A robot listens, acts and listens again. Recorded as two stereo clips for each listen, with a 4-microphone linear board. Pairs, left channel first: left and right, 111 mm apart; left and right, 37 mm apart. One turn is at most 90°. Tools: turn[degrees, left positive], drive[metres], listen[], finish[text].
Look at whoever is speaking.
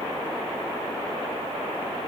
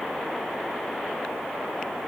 Action: listen[]
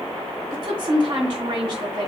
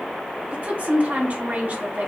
Thought: The woman speaking: about 60° right or 120° right.
Action: turn[-60]
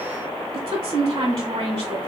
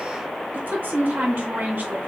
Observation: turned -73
Thought: So it is at 45° right.
Action: turn[-45]
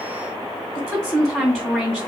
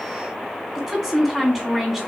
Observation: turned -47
Action: finish[Found it: a woman speaking, straight ahead, 1 to 2 m away.]